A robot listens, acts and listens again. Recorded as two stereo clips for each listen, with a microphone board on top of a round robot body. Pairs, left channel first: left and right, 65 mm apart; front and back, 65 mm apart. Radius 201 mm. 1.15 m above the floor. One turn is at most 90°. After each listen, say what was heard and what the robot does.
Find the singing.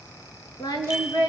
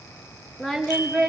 The singing: 85° left. Turn 85° left.
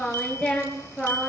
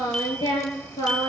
The singing is now 15° left. Turn 15° left.
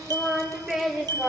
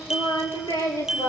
Facing the singing, over 4 m away.